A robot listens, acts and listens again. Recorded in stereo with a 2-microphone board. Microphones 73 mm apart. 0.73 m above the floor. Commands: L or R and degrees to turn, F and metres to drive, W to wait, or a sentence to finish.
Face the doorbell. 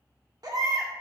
W
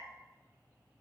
W
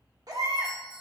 R60
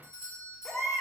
R50
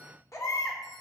W
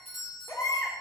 Facing the doorbell, 2 to 4 m away.